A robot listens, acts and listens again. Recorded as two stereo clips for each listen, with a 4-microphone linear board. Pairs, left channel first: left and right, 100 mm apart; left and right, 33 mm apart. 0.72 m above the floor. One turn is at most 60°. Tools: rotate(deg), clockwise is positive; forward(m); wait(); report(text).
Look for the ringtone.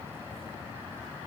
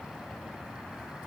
wait()
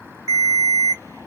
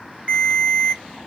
rotate(35)
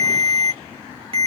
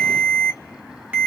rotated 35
rotate(60)
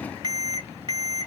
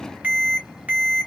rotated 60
rotate(50)
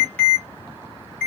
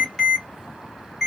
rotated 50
rotate(-10)
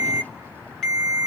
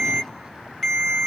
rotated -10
report("Found it: a ringtone, straight ahead, 1 to 2 m away.")